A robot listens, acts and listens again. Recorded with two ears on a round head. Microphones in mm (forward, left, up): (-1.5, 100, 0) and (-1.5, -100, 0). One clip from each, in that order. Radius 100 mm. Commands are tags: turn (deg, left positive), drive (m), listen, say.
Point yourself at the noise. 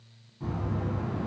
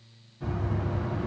<turn deg="15"/>
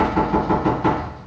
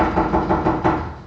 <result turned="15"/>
<say>Found it: knocking, straight ahead, 1 to 2 m away.</say>